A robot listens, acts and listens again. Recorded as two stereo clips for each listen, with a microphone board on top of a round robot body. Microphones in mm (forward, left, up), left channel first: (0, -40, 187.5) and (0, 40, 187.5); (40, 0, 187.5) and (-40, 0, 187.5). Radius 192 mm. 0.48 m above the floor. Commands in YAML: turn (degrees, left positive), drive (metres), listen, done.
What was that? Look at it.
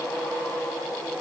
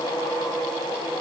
listen: true
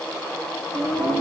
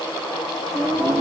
turn: 110
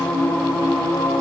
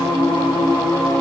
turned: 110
done: "Found it: singing, straight ahead, 2 to 4 m away."